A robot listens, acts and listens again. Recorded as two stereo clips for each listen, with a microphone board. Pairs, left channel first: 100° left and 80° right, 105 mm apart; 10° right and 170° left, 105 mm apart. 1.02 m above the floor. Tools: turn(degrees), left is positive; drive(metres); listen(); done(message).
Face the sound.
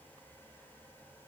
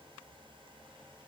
listen()
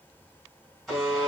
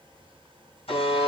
turn(degrees=15)
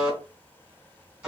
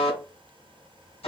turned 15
done("Found it: a buzzer, straight ahead, 2 to 4 m away.")